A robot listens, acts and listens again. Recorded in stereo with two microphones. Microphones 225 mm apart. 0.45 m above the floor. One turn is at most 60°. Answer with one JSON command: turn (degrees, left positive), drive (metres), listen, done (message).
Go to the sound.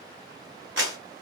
{"turn": -60}
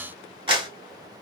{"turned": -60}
{"turn": -25}
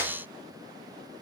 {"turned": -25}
{"turn": -15}
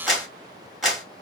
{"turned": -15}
{"drive": 1.0}
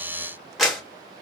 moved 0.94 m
{"drive": 1.0}
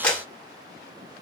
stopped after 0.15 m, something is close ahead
{"done": "I am next to the clap."}